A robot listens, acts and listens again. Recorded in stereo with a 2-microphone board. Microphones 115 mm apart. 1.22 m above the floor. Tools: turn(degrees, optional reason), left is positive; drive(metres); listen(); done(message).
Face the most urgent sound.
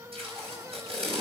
listen()
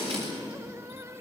listen()
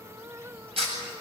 done("I can't make out anything urgent, only tape being pulled.")